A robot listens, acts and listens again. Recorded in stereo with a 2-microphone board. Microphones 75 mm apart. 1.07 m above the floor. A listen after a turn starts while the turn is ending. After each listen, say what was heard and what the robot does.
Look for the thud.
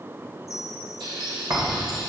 The thud: about 55° right or 125° right. Turn 55° right.
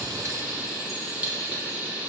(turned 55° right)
Keep listening.
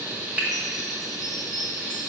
I heard a thud, but can't make it out now. It was about straight ahead or 70° right.